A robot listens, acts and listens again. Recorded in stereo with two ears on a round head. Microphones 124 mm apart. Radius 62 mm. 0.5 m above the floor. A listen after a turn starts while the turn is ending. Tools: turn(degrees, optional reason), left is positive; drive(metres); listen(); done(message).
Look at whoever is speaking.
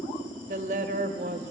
turn(degrees=-60, reason="The woman speaking: about 60° right or 120° right.")
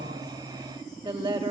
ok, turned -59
turn(degrees=-40, reason="So it is at 40° right.")
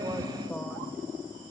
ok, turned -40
done("Facing the woman speaking.")